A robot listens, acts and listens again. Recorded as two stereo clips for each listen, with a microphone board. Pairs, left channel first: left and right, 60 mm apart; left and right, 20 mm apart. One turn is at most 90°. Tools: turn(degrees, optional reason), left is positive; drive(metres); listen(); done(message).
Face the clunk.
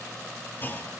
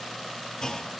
turn(degrees=30, reason="The clunk: about 30° left or 150° left.")
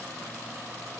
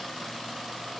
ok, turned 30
listen()
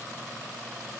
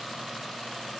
done("I heard a clunk, but can't make it out now. It was about straight ahead or 120° left.")